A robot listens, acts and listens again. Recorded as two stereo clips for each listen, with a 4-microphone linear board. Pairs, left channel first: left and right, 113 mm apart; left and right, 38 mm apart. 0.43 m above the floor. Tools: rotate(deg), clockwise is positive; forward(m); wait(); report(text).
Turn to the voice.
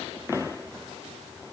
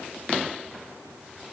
wait()
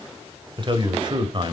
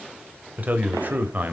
rotate(40)
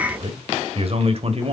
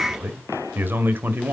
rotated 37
rotate(90)
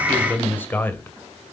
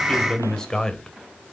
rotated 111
rotate(-20)
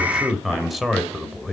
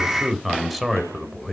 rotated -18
report("Facing the man speaking, 1 to 2 m away.")